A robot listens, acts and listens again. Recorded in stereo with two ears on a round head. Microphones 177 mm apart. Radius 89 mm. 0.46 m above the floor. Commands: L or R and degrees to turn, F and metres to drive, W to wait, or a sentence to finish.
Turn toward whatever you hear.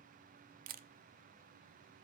R45
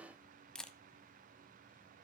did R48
Facing the camera shutter.